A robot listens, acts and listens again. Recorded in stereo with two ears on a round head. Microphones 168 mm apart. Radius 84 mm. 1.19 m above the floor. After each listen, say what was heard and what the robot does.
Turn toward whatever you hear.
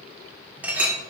Turn 30° right.
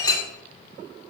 So it is at 20° left. Turn 20° left.
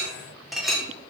Facing the clink, 1 to 2 m away.